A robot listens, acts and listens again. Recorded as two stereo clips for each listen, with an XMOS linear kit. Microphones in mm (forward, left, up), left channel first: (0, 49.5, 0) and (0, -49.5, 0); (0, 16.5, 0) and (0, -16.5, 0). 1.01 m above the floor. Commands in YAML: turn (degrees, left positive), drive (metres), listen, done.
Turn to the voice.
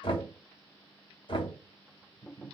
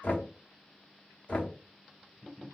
listen: true
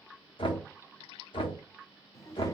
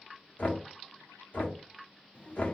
turn: 30
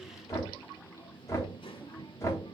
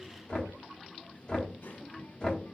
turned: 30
turn: 120
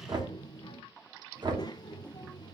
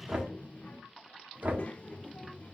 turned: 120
turn: 40
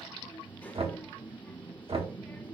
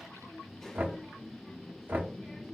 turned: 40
turn: 15
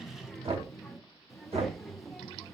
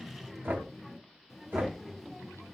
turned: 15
done: "Found it: a child speaking, straight ahead."